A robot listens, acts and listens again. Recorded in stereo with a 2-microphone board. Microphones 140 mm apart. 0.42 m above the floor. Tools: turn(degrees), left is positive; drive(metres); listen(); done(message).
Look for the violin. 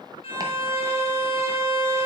turn(degrees=40)
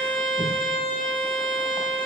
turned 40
turn(degrees=100)
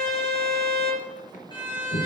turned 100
turn(degrees=35)
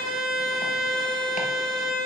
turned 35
done("Facing the violin, 2 to 4 m away.")